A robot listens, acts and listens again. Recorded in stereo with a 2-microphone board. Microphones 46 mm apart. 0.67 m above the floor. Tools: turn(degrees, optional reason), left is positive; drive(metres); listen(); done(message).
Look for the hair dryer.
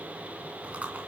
listen()
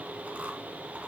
listen()
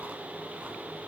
done("I can't make out a hair dryer to turn to.")